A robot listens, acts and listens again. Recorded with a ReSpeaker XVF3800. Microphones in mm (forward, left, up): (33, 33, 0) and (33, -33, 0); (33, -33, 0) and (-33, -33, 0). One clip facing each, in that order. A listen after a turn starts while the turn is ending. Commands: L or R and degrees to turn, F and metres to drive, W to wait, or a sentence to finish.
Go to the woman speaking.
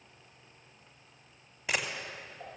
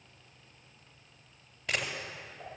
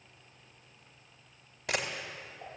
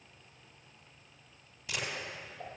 W
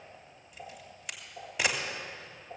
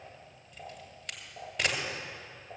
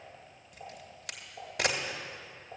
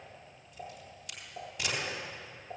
W
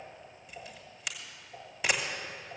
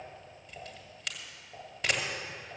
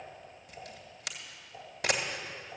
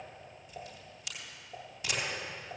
I can't make out a woman speaking to turn to.